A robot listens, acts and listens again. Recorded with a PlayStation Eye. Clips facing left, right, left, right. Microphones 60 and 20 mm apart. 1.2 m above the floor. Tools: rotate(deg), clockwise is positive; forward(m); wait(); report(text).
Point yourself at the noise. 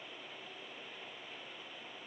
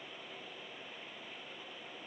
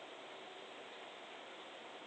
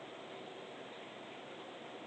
wait()
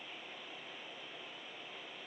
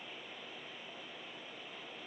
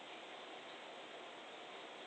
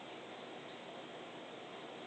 wait()
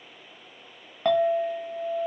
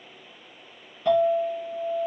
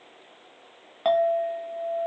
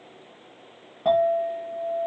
rotate(-70)
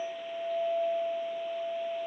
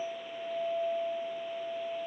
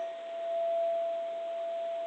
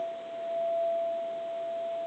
report("Found it: a clink, straight ahead, 1 to 2 m away.")